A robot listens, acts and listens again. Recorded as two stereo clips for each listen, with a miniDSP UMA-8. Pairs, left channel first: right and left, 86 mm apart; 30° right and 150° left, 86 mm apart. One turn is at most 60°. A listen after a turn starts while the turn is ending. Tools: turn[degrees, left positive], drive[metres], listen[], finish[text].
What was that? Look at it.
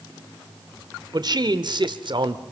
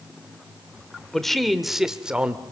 Thought: The man speaking: 75° left.
Action: turn[60]
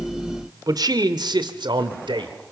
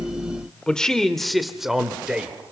Thought: The man speaking is now 70° left.
Action: turn[60]
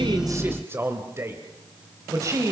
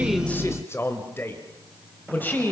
Thought: The man speaking is now 40° left.
Action: turn[40]
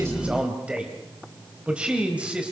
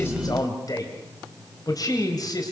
Thought: The man speaking is now 15° left.
Action: turn[15]
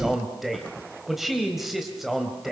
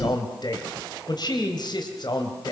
Action: finish[Found it: a man speaking, straight ahead, 2 to 4 m away.]